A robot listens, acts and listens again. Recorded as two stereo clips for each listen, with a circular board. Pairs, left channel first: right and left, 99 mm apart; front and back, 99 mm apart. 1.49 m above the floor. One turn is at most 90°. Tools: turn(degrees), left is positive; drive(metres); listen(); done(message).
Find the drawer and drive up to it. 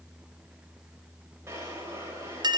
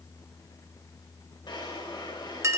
turn(degrees=30)
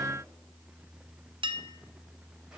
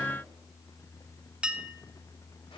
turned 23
listen()
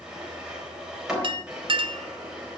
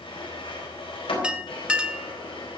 turn(degrees=10)
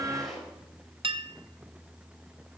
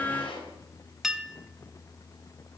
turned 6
drive(metres=1.0)
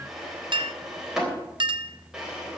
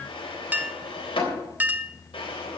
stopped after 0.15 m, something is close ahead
done("Blocked. The drawer is further on, straight ahead.")